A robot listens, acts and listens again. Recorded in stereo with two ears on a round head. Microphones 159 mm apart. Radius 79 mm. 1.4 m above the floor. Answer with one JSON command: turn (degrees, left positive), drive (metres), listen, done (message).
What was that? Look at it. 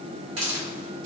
{"turn": -90}
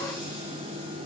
{"listen": true}
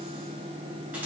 {"listen": true}
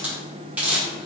{"turn": -10}
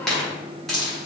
{"done": "Found it: a hiss, straight ahead, 1 to 2 m away."}